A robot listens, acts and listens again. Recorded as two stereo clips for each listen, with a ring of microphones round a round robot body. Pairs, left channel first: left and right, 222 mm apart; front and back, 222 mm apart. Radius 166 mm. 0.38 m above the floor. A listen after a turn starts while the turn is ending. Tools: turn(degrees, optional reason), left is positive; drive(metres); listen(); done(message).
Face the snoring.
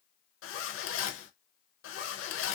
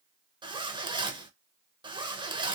listen()
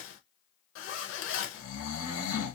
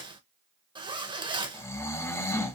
turn(degrees=80, reason="The snoring: 80° left.")
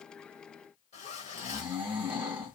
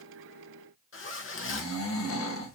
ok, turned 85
done("Facing the snoring, under 1 m away.")